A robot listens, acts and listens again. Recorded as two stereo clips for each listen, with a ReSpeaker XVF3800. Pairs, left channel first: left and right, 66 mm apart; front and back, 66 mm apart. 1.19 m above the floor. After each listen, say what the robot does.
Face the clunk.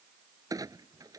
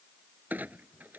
Turn 115° right.
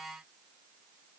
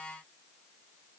Facing where the clunk came from. I can't hear it now.